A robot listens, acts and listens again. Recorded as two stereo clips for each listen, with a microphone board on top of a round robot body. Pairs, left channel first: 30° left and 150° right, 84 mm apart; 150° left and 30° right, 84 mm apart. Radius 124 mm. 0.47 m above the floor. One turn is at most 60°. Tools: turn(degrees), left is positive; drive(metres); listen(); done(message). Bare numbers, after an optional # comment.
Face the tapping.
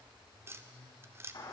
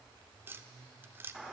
# The tapping: 90° right.
turn(-60)
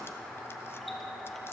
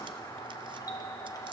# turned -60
# Nothing new. It was at 30° right.
turn(-30)
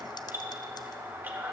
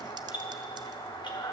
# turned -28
listen()
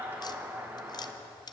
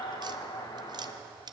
done("Facing the tapping, under 1 m away.")